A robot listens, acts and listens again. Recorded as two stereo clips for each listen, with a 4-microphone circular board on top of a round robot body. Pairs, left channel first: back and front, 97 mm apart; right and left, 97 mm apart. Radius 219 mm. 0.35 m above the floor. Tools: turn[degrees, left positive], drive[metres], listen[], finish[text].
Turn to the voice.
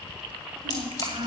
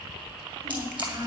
Thought: The child speaking: 35° left.
Action: turn[35]
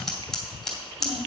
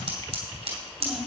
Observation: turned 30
Action: listen[]
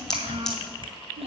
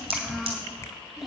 Action: finish[Found it: a child speaking, straight ahead.]